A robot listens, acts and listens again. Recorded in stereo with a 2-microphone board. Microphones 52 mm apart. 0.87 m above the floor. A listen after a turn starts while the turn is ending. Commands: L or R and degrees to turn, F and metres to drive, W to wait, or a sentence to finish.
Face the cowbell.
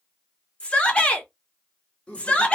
W
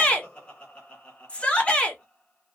W
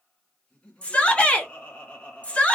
I can't make out a cowbell, only a shout and laughter.